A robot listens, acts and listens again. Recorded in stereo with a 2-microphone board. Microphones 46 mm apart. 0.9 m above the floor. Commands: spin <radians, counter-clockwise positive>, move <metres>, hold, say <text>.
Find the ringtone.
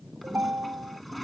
spin -0.96
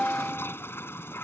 say Found it: a ringtone, straight ahead.